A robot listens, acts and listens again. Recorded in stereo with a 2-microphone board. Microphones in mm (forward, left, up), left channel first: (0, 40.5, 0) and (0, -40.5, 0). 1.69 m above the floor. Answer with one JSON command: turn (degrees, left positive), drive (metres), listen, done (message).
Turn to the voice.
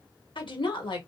{"turn": 90}
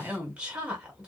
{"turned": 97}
{"turn": -15}
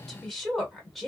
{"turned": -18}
{"done": "Facing the woman speaking, 1 to 2 m away."}